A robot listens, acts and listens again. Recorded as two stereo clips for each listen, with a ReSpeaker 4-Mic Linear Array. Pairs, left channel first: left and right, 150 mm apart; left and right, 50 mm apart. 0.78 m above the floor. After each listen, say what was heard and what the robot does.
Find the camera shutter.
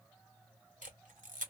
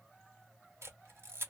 The camera shutter: about 60° right or 120° right. Turn 60° right.
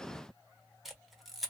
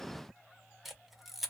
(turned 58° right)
Found it: a camera shutter, straight ahead.